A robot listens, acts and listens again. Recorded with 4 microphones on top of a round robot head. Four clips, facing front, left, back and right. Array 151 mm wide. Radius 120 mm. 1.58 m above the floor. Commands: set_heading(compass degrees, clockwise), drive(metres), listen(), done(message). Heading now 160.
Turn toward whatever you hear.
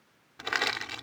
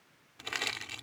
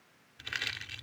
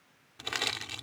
set_heading(170)
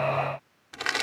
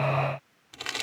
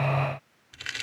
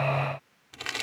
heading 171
done("Facing the crushing.")